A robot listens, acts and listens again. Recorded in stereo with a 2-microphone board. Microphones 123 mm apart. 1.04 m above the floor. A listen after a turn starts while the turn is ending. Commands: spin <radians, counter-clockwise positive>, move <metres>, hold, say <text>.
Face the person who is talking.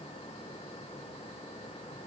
hold
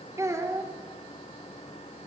spin -0.44
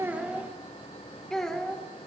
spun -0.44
say Found it: a child speaking, straight ahead, 2 to 4 m away.